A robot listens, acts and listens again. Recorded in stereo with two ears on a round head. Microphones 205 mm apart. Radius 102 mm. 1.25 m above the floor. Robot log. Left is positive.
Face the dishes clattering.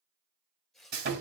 cmd idle
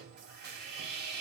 cmd idle
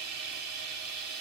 end: I can't make out dishes clattering to turn to.